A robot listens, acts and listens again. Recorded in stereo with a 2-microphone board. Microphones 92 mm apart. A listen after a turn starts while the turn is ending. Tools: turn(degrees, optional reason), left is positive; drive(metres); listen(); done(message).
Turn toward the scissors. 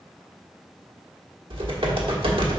listen()
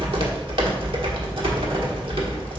listen()
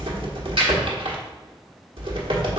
done("I can't make out scissors, only typing on a keyboard.")